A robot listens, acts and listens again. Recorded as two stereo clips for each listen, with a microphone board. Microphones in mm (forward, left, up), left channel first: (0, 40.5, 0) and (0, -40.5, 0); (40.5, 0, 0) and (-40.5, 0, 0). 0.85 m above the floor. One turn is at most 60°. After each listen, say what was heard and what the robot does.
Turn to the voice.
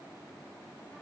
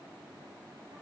Keep listening.
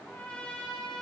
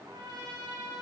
Keep listening.
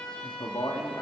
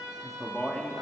The man speaking: 80° left. Turn 60° left.
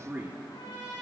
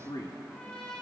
The man speaking is now 25° right. Turn 25° right.
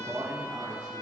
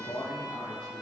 The man speaking is now 20° right. Turn 20° right.
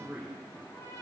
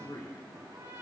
The man speaking is now 10° right. Turn 10° right.
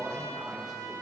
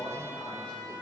Found it: a man speaking, straight ahead, 2 to 4 m away.